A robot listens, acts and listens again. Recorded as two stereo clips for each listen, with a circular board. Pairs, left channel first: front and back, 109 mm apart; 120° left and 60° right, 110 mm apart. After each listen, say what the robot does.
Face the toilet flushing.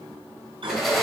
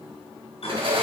Turn 145° left.
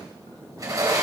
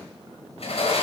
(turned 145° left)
Keep listening.
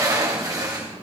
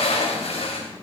Keep listening.
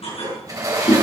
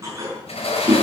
Found it: a toilet flushing, straight ahead, over 4 m away.